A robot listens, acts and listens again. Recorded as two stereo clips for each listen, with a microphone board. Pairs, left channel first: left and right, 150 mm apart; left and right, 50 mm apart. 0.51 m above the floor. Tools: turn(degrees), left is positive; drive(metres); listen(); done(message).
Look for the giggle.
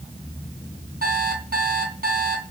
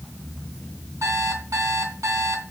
listen()
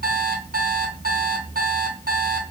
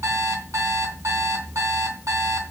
listen()
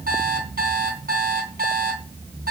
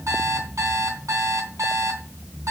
done("I can't make out a giggle, only an alarm clock.")